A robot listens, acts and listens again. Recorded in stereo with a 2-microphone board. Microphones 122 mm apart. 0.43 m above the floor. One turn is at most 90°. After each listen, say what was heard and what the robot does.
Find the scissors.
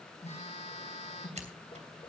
The scissors: about 60° right or 120° right. Turn 60° right.
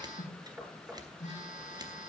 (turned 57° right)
So it is at 40° right. Turn 40° right.
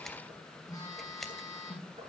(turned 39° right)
Found it: scissors, straight ahead, 2 to 4 m away.